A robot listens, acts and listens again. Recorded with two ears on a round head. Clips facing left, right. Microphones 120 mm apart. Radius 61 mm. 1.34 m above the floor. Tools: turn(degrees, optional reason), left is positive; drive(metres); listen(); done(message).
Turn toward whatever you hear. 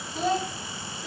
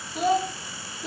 turn(degrees=-20, reason="The child speaking: about 20° right or 160° right.")
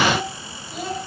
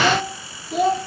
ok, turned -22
turn(degrees=-120, reason="So it is at 120° right.")
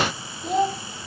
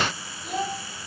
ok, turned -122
turn(degrees=30, reason="The child speaking is now 30° left.")
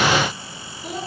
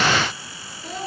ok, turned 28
turn(degrees=15, reason="The child speaking is now 15° left.")
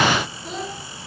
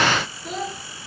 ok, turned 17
done("Found it: a child speaking, straight ahead, 2 to 4 m away.")